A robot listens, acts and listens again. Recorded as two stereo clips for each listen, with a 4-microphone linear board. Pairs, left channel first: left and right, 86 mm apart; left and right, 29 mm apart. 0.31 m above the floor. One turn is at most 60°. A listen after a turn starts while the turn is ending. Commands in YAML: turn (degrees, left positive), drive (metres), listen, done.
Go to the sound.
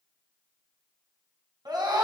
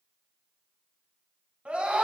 turn: -50
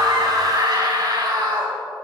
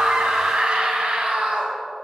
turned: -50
turn: -60
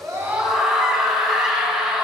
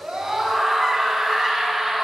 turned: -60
drive: 1.0
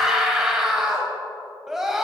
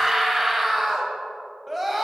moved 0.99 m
drive: 1.0
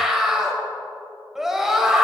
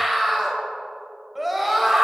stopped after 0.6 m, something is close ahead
turn: -10
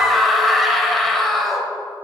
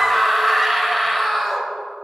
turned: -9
done: "I am next to the scream."